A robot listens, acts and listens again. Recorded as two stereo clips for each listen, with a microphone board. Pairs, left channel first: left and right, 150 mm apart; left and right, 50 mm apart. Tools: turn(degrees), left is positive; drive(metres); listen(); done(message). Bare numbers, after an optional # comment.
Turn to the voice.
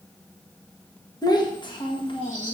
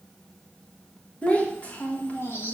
# The child speaking: about 35° left or 145° left.
turn(35)
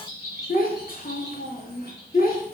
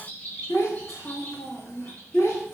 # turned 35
# So it is at 100° left.
turn(100)
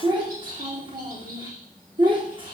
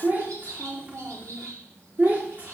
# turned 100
# The child speaking is now 35° right.
turn(-35)
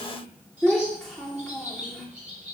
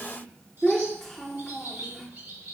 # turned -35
done("Facing the child speaking.")